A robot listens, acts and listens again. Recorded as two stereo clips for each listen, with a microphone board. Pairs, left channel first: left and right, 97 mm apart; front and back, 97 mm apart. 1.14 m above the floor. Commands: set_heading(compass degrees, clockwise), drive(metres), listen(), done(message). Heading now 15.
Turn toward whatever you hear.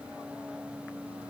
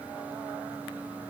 listen()
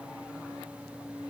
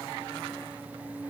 listen()
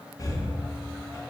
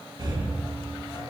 set_heading(235)
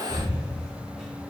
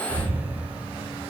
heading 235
done("Facing the breathing.")